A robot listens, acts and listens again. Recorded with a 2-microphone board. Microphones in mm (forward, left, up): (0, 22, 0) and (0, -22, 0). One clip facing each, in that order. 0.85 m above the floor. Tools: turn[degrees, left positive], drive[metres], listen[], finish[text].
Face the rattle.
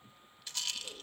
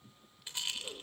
Thought: The rattle: about 25° right or 155° right.
Action: turn[-25]
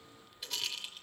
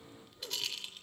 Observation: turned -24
Action: finish[Found it: a rattle, straight ahead.]